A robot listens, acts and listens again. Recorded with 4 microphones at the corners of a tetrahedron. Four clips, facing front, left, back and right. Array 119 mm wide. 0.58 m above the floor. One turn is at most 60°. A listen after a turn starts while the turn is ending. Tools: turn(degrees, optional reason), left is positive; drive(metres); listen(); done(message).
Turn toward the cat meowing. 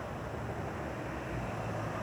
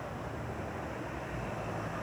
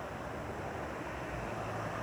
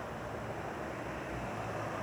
listen()
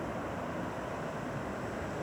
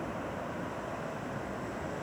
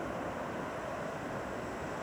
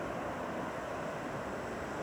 listen()
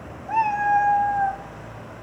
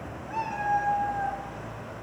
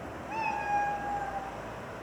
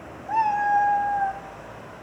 turn(degrees=-35, reason="The cat meowing: 35° right.")
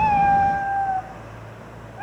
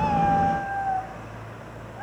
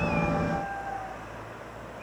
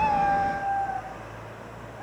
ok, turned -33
turn(degrees=25, reason="The cat meowing is now 25° left.")
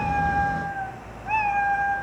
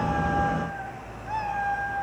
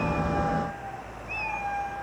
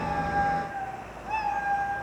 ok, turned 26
done("Found it: a cat meowing, straight ahead, 2 to 4 m away.")